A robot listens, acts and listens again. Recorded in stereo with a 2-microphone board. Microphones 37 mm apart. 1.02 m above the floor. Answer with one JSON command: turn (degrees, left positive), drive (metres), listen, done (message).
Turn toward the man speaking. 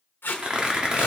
{"listen": true}
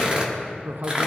{"turn": -70}
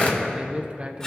{"turn": -35}
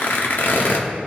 {"listen": true}
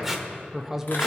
{"turn": -10}
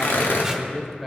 {"done": "Found it: a man speaking, straight ahead."}